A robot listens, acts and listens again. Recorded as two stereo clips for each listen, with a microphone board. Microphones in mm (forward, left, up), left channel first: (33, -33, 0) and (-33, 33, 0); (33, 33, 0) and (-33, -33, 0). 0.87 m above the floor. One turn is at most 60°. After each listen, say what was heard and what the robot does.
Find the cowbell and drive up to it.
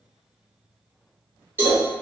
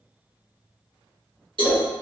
The cowbell: 160° right. Turn 60° right.
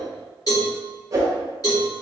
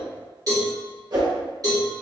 The cowbell is now 90° right. Turn 60° right.
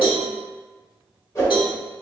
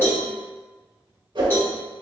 The cowbell is now 20° right. Turn 20° right.
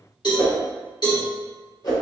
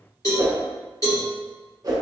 Drive 1.0 m forward.
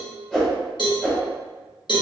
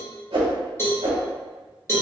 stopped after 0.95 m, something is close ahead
The cowbell is now 15° right. Turn 15° right.
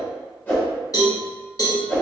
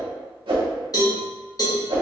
Arrived at the cowbell, straight ahead.